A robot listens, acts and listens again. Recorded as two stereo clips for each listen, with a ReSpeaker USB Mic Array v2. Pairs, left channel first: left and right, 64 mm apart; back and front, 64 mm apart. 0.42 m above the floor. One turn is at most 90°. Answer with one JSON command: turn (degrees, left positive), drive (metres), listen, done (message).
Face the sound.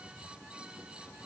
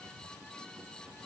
{"listen": true}
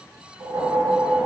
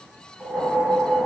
{"turn": -90}
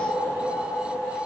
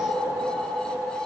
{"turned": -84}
{"done": "Facing the whoosh."}